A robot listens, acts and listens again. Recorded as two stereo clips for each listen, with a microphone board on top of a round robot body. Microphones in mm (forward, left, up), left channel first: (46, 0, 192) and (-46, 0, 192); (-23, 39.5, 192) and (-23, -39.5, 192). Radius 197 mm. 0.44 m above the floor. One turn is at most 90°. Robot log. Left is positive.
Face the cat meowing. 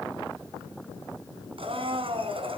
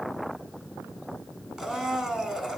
cmd idle
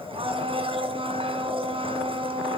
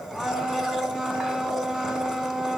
cmd idle
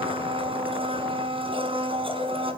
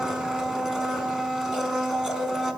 end: I can't make out a cat meowing, only a blender.